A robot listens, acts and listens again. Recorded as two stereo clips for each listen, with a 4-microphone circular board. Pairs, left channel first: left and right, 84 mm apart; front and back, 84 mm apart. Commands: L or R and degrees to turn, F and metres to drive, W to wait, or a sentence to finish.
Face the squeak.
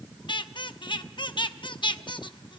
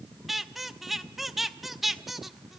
L95
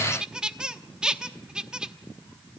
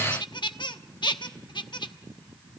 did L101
R10
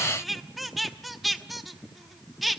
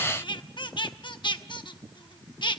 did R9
Facing the squeak.